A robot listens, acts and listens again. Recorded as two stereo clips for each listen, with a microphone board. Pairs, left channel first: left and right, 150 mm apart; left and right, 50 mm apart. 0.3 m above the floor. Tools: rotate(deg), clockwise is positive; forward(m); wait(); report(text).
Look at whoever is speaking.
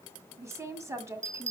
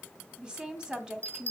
rotate(20)
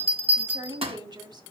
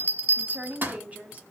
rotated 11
rotate(150)
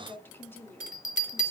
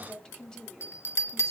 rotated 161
rotate(-15)
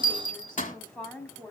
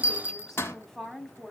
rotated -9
report("Found it: a woman speaking, straight ahead, 2 to 4 m away.")